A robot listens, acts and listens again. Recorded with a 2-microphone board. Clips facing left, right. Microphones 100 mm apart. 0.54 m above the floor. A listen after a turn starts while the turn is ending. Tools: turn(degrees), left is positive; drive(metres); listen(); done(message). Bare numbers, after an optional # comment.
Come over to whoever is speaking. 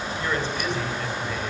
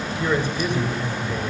turn(-30)
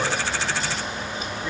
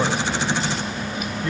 # So it is at 15° left.
turn(15)
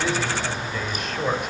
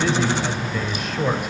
drive(1.0)
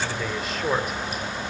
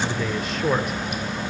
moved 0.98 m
drive(1.0)
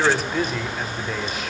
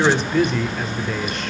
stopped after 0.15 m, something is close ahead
done("Arrived at the man speaking, straight ahead.")